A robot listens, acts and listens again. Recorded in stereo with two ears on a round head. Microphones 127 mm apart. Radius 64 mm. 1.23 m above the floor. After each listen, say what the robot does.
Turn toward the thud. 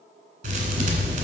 Turn 50° right.
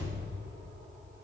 Keep listening.
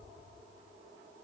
I heard a thud, but can't make it out now. It was about straight ahead or 80° right.